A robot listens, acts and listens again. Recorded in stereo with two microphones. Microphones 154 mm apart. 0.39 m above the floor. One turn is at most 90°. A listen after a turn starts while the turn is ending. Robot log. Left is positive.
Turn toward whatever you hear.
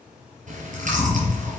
note: The chewing: about 60° right or 120° right.
cmd yaw -60
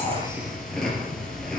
end: Facing the chewing.